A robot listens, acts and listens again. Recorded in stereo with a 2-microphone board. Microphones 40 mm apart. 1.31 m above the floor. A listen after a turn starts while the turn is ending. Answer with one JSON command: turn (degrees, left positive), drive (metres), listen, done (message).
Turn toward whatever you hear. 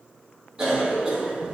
{"turn": -30}
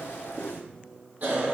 {"turn": -135}
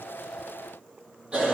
{"turn": -25}
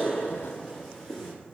{"done": "Facing the cough, 2 to 4 m away."}